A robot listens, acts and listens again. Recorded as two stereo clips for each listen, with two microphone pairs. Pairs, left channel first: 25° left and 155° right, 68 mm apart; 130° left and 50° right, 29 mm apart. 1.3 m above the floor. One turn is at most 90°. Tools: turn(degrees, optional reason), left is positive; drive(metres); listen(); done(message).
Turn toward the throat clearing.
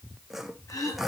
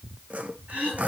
turn(degrees=-10, reason="The throat clearing: 10° right.")
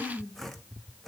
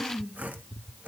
done("Found it: throat clearing, straight ahead, over 4 m away.")